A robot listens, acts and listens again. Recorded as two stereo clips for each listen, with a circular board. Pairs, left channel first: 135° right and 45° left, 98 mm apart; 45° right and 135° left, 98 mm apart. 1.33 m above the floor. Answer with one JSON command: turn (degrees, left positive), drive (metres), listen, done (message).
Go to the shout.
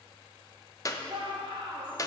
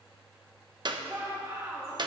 {"turn": 75}
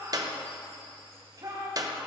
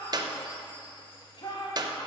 {"drive": 1.0}
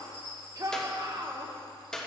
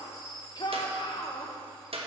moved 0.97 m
{"drive": 1.0}
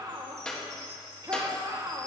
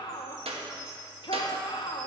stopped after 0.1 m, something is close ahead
{"done": "Arrived at the shout, straight ahead."}